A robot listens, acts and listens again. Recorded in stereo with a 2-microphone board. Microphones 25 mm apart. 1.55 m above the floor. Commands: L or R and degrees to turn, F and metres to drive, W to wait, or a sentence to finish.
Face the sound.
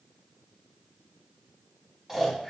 R30
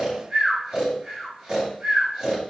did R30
R135
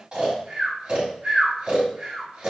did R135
R35
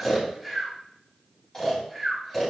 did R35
L20
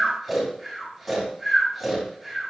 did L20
Found it: snoring, straight ahead, 2 to 4 m away.